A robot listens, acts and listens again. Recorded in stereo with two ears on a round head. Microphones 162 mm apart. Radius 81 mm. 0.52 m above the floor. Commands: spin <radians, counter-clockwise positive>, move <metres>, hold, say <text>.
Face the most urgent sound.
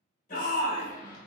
spin 0.87
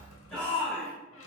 say Found it: a shout, straight ahead.